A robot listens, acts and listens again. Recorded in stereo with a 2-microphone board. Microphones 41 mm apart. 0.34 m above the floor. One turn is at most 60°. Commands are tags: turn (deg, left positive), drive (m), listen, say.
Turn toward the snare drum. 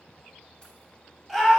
<listen/>
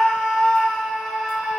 <listen/>
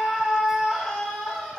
<say>I can't make out a snare drum to turn to.</say>